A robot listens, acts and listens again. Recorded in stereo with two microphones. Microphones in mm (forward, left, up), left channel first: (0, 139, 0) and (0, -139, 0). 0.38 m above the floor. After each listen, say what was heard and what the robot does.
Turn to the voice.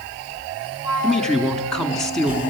Turn 30° left.
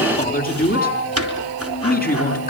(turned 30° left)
So it is at 145° left. Turn 145° left.
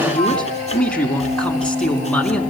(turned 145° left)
Found it: a man speaking, straight ahead, over 4 m away.